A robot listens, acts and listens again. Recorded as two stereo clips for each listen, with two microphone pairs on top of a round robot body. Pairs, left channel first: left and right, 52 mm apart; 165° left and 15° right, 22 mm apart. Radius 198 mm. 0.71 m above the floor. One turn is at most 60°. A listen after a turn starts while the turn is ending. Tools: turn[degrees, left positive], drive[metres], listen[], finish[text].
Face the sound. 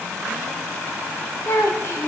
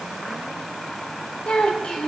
Thought: The child speaking: 120° left.
Action: turn[60]
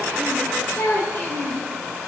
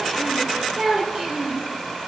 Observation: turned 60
Thought: The child speaking is now 40° left.
Action: turn[40]
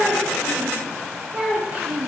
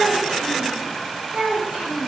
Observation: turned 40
Thought: The child speaking is now 15° right.
Action: turn[-15]
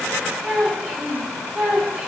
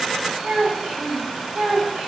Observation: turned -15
Action: finish[Facing the child speaking.]